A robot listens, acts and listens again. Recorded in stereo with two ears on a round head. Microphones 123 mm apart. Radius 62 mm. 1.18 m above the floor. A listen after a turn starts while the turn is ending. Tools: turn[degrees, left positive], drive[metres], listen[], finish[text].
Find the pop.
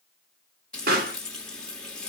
Thought: The pop: about 75° right or 105° right.
Action: turn[-75]
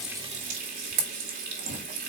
Action: listen[]
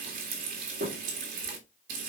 Action: finish[I heard a pop, but can't make it out now. It was about straight ahead or 30° right.]